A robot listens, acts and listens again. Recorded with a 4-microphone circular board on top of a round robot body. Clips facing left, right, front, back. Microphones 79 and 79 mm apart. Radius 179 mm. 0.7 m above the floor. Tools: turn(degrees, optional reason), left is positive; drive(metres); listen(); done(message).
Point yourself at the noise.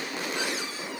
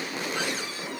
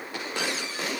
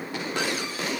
listen()
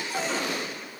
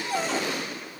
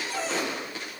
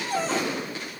turn(degrees=-130, reason="The cupboard door: 130° right.")
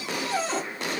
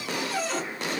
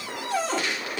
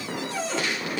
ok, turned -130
turn(degrees=30, reason="The cupboard door is now 30° left.")
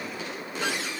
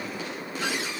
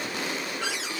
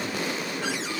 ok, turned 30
listen()
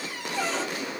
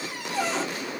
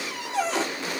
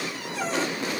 turn(degrees=-10, reason="The cupboard door is now 10° right.")
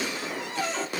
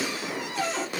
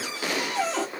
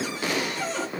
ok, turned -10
done("Found it: a cupboard door, straight ahead.")